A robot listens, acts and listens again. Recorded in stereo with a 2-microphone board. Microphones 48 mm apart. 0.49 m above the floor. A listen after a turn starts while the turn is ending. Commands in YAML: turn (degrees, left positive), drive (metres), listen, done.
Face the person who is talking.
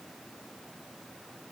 listen: true
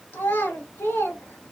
turn: 60
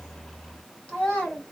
turn: 30
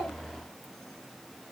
listen: true
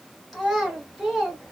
done: "Facing the child speaking, 1 to 2 m away."